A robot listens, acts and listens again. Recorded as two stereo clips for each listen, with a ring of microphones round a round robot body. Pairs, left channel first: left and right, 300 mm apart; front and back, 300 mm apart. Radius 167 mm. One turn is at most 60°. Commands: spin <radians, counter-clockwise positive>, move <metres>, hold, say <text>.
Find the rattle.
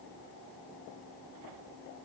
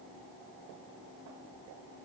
hold
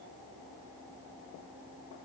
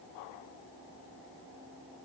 hold
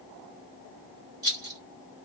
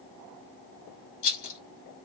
spin -0.26
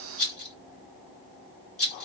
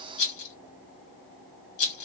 say Found it: a rattle, straight ahead.